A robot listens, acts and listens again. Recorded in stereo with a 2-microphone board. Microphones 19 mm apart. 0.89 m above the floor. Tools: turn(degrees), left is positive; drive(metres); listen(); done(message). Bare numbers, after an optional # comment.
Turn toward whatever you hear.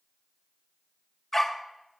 turn(30)
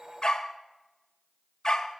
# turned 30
# So it is at 145° left.
turn(145)
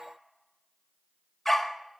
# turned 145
# The dog barking is now 20° left.
turn(20)
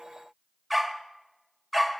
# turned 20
done("Found it: a dog barking, straight ahead, 1 to 2 m away.")